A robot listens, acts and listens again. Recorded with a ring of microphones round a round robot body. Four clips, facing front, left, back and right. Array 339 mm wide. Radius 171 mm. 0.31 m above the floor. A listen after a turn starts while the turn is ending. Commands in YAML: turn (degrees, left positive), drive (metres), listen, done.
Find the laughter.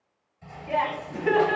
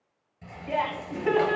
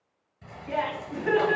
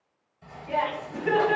turn: 55
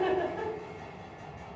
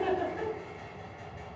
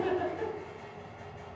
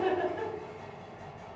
listen: true
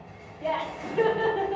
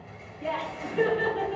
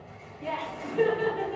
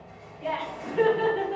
turn: 20
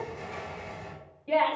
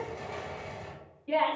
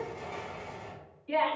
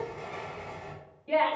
done: "Found it: laughter, straight ahead, 2 to 4 m away."